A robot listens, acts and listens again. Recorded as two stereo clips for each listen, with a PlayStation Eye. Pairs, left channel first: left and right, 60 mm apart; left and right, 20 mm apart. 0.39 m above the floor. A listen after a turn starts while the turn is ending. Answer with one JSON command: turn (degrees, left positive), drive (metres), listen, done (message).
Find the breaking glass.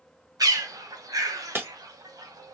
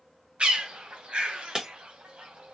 {"turn": -35}
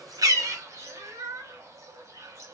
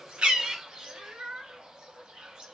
{"listen": true}
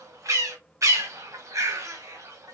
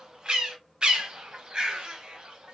{"done": "I heard breaking glass, but can't make it out now. It was about straight ahead or 110° right."}